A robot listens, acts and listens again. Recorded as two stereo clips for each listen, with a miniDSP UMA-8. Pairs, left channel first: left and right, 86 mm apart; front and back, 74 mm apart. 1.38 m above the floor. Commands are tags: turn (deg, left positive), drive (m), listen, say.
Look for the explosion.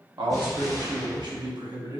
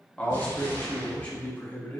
<say>Facing the explosion.</say>